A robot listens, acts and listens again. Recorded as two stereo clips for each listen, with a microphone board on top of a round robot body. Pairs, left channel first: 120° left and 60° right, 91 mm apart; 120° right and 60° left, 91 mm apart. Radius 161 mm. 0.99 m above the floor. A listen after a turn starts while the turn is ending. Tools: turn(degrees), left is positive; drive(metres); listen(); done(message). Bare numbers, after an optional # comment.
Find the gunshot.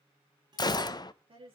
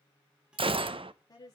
# The gunshot: 75° left.
turn(75)
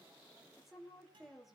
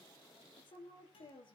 done("I heard a gunshot from this way, but can't make it out now.")